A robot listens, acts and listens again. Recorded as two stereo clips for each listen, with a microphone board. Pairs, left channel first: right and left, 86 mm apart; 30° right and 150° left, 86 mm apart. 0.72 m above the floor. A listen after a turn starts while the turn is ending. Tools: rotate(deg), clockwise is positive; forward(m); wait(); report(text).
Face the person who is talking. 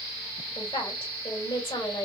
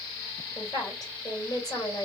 rotate(75)
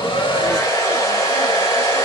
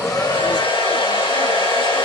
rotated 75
wait()
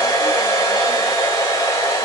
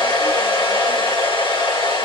wait()
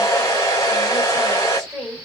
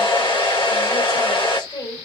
report("Facing the woman speaking.")